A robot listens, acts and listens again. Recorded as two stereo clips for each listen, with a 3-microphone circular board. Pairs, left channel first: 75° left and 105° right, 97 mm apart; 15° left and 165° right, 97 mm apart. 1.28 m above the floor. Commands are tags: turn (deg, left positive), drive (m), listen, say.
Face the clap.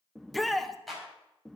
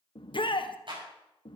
<turn deg="165"/>
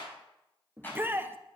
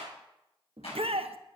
<say>Facing the clap, over 4 m away.</say>